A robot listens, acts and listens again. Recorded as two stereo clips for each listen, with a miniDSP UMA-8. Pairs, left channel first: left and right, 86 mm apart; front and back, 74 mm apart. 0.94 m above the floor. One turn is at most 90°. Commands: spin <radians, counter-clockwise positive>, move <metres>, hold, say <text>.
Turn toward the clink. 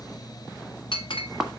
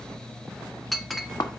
spin 1.57
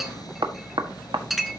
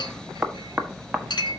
say Facing the clink, under 1 m away.